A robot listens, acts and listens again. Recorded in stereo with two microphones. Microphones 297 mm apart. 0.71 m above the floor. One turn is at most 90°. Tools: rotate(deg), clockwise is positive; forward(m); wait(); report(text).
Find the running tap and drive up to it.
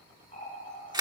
rotate(-25)
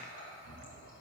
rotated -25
rotate(-90)
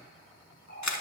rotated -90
rotate(-35)
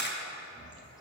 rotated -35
forward(1.0)
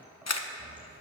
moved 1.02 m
forward(1.0)
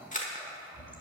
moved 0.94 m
forward(1.0)
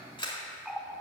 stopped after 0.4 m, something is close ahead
report("Arrived at the running tap, straight ahead.")